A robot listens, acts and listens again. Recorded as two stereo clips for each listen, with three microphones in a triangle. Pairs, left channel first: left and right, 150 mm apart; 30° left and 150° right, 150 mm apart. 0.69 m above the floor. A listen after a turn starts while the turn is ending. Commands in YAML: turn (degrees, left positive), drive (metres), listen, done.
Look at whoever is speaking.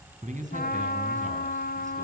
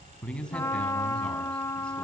turn: -55
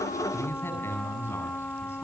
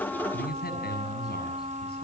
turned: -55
turn: 15
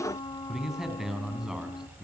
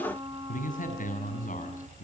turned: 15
done: "Facing the man speaking, over 4 m away."